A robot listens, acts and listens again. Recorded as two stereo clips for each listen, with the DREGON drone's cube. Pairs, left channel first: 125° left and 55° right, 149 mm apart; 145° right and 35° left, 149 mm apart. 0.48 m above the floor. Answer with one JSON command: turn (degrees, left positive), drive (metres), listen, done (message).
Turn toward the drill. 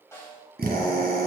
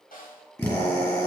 {"turn": -75}
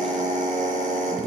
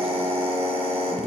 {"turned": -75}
{"turn": -25}
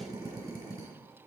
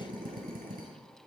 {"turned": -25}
{"done": "Facing the drill."}